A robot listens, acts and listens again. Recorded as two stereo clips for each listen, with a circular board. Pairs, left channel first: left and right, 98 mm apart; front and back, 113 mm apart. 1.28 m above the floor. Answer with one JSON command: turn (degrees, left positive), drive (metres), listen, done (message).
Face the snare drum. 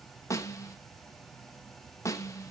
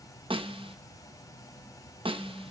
{"turn": 145}
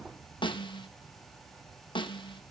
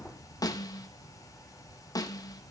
{"turn": 55}
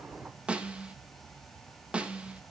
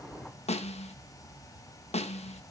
{"turn": -10}
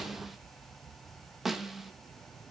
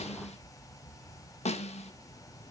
{"done": "Facing the snare drum, 1 to 2 m away."}